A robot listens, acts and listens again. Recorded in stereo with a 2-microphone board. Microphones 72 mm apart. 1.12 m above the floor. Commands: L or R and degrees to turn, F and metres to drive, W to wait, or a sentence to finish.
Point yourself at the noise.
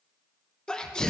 L30
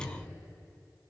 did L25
W
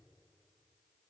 I heard a sneeze, but can't make it out now. It was about 15° right or 145° left.